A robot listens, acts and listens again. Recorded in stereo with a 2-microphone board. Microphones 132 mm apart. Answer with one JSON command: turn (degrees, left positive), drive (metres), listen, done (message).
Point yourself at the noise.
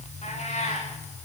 {"turn": 60}
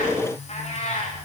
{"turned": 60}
{"turn": 55}
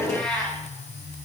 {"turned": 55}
{"done": "Facing the cat meowing."}